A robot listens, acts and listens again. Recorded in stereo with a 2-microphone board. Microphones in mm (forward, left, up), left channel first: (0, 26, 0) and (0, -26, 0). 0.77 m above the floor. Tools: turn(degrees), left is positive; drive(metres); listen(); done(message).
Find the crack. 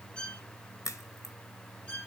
turn(degrees=90)
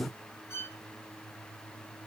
done("I heard a crack from this way, but can't make it out now.")